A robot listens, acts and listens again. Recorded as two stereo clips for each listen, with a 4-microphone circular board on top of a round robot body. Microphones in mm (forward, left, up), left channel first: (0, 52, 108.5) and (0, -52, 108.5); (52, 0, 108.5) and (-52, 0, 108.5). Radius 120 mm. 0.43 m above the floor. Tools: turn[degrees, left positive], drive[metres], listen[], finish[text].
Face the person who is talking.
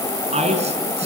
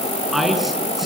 Thought: The man speaking: 95° right.
Action: turn[-95]
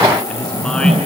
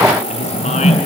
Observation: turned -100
Action: finish[Facing the man speaking.]